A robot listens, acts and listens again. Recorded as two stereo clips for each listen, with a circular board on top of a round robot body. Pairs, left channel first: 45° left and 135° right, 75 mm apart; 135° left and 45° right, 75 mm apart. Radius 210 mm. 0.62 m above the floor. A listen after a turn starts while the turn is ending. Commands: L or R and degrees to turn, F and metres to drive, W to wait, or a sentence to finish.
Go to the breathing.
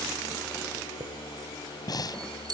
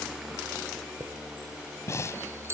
L80
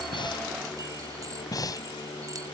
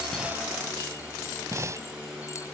F1.0
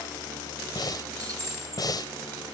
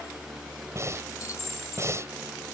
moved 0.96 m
L10
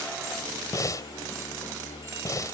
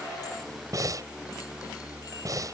F1.0
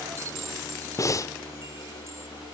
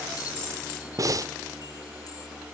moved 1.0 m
F1.0
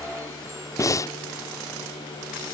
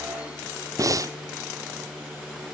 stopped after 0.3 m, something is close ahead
I am next to the breathing.